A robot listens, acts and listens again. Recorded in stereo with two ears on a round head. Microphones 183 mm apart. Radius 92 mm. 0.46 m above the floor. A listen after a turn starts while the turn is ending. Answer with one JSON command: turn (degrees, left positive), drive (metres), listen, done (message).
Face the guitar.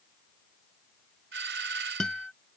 {"turn": 30}
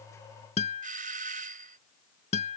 {"turn": 145}
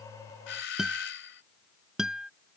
{"done": "Facing the guitar."}